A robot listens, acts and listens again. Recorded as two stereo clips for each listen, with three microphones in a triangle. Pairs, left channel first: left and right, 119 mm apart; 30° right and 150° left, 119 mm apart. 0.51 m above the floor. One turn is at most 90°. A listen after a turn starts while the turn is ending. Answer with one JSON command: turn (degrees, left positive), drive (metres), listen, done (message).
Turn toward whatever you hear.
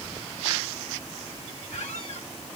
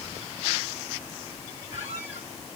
{"turn": 90}
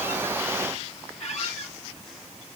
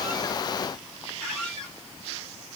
{"turn": 55}
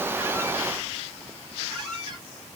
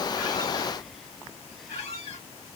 {"done": "Facing the squeak."}